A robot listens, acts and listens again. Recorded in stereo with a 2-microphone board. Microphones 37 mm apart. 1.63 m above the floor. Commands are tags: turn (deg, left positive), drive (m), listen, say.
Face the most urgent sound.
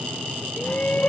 <turn deg="50"/>
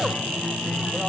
<listen/>
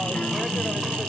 <listen/>
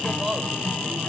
<say>I heard a shout, but can't make it out now. It was about straight ahead or 80° left.</say>